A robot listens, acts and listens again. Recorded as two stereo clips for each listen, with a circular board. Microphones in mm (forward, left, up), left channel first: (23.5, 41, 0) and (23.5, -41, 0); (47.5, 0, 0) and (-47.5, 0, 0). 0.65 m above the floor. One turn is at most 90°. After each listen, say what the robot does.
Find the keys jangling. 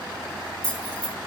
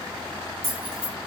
Turn 90° left.
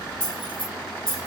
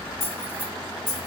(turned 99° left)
Turn 65° left.
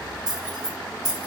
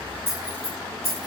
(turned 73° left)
Facing the keys jangling.